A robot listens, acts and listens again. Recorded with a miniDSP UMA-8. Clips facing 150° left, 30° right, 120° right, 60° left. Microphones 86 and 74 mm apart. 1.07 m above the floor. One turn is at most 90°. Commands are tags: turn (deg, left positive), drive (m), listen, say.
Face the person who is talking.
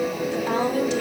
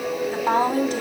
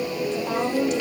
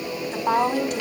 <turn deg="20"/>
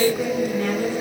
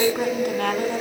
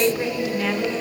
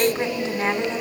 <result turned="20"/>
<say>Found it: a woman speaking, straight ahead.</say>